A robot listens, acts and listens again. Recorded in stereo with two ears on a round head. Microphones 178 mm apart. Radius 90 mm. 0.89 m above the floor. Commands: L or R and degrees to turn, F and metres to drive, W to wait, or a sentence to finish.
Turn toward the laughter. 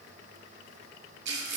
W
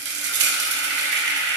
W
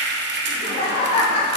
L30
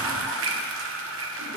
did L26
W
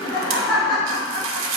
L20
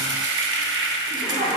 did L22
Found it: laughter, straight ahead.